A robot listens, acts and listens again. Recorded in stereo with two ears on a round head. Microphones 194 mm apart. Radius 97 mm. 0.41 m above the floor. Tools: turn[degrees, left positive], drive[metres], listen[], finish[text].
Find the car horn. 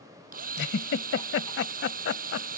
Action: listen[]
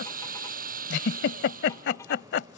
Action: listen[]
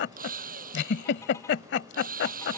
Action: finish[I can't make out a car horn to turn to.]